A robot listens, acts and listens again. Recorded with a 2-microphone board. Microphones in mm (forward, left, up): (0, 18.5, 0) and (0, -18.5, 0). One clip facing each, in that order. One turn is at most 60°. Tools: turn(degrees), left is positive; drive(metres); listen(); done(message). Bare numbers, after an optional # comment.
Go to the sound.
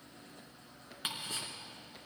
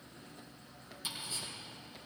# The ticking: about 65° left or 115° left.
turn(60)
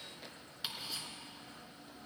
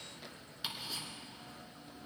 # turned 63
drive(1.0)
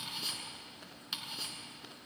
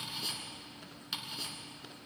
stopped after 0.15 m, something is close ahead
done("Something is in my way. I am facing the ticking but have not reached it.")